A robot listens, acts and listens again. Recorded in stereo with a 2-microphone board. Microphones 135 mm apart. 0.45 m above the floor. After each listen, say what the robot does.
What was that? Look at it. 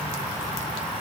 Keep listening.
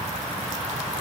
Keep listening.
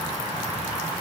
I can't make out anything.